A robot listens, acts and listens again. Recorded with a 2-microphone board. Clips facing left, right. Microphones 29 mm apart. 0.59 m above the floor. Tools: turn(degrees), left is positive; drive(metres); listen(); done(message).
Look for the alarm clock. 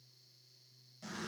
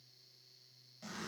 listen()
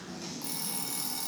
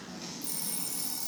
turn(degrees=50)
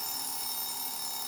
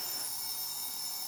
turn(degrees=80)
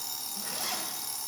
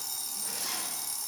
turn(degrees=15)
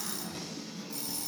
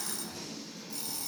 done("Found it: an alarm clock, straight ahead.")